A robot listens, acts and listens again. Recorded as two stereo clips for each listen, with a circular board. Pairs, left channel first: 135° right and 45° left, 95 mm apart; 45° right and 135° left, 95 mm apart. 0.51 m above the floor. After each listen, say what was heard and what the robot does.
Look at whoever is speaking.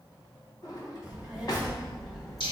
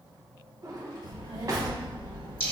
The child speaking: 140° left. Turn 140° left.
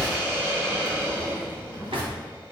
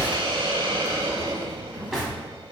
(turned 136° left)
The child speaking is now 25° left. Turn 25° left.
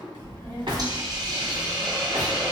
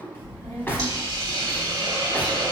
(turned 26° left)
The child speaking is now 10° left. Turn 10° left.
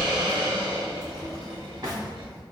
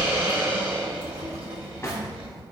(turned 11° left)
Facing the child speaking.